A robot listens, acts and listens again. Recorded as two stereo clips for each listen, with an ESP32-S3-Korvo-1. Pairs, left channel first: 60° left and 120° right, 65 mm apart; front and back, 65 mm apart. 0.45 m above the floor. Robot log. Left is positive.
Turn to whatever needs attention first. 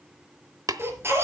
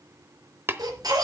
note: The baby crying: 170° right.
cmd yaw -170
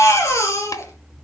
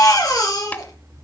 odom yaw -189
note: The baby crying is now 20° left.
cmd yaw +20
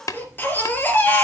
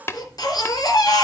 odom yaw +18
end: Facing the baby crying, 2 to 4 m away.